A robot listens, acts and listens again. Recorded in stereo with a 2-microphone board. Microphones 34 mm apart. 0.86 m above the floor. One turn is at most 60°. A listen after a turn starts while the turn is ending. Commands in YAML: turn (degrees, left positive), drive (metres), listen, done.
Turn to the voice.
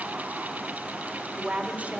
turn: -50
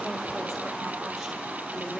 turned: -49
listen: true
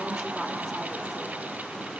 done: "Facing the woman speaking."